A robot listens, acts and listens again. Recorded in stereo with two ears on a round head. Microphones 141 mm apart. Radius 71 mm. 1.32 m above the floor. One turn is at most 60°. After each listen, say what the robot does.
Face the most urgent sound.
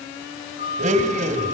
Turn 60° left.
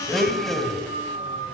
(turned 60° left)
Turn 60° left.
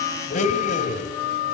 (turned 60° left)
Facing the siren, over 4 m away.